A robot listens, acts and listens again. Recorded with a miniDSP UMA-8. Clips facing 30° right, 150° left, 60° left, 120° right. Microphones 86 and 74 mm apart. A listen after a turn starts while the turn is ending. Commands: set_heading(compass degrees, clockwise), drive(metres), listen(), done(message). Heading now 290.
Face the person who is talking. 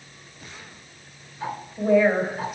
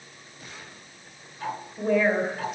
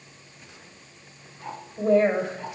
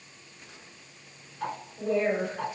set_heading(235)
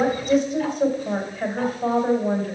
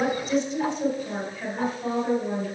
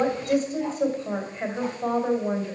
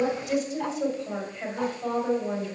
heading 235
set_heading(225)
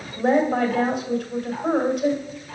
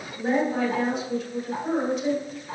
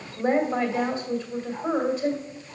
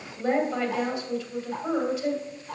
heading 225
done("Facing the woman speaking, 2 to 4 m away.")